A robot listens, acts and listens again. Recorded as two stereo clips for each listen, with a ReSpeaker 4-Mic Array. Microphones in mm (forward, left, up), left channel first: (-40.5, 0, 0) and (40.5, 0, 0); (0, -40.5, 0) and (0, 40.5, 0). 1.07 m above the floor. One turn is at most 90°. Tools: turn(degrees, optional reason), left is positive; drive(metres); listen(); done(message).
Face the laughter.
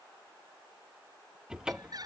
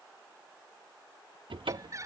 turn(degrees=40, reason="The laughter: 40° left.")
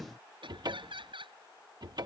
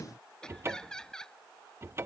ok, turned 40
turn(degrees=-10, reason="The laughter is now 10° right.")
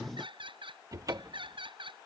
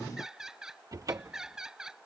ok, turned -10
done("Facing the laughter.")